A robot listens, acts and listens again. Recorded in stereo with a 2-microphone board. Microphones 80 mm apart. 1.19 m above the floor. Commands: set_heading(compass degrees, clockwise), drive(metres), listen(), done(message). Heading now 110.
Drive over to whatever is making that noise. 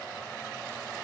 listen()
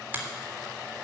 set_heading(135)
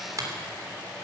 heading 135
set_heading(265)
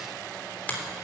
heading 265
set_heading(245)
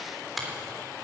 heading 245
drive(1.0)
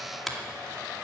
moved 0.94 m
drive(1.0)
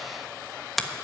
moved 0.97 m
drive(1.0)
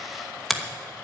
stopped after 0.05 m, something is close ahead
done("I am next to the finger snap.")